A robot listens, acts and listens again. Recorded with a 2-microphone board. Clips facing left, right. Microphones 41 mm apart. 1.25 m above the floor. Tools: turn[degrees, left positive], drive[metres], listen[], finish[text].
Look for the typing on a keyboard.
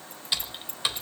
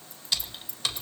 Thought: The typing on a keyboard: about 20° left or 160° left.
Action: turn[20]
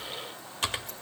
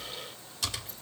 Thought: So it is at 140° left.
Action: turn[140]
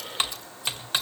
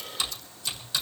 Thought: The typing on a keyboard is now 50° left.
Action: turn[50]
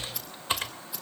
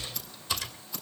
Thought: The typing on a keyboard is now 35° left.
Action: turn[35]
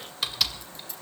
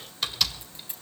Action: finish[Facing the typing on a keyboard.]